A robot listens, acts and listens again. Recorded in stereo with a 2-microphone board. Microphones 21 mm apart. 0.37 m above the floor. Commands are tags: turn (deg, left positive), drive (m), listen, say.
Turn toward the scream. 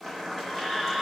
<turn deg="20"/>
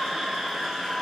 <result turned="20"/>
<say>Found it: a scream, straight ahead.</say>